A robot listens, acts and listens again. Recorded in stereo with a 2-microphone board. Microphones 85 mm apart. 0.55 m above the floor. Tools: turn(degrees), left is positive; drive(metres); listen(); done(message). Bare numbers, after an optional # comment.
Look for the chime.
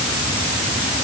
listen()
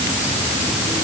listen()
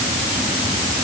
done("I can't make out a chime to turn to.")